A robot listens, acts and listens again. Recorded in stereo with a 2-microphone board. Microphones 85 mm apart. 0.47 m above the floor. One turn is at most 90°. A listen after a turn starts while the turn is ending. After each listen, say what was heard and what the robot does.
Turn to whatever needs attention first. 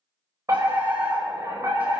The fire alarm: about 40° right or 140° right. Turn 40° right.
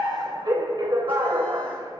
So it is at 90° right. Turn 90° right.
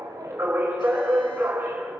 The fire alarm is now 30° right. Turn 30° right.
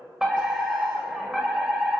Facing the fire alarm, 2 to 4 m away.